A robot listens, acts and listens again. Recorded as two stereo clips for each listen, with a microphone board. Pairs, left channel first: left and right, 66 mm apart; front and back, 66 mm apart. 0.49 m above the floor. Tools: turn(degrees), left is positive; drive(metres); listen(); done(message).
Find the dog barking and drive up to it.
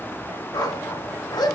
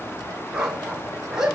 turn(degrees=100)
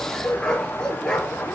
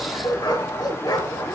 turn(degrees=10)
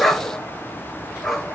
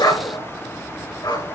drive(metres=1.0)
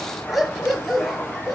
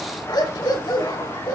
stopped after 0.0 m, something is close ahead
done("Blocked. The dog barking is further on, straight ahead.")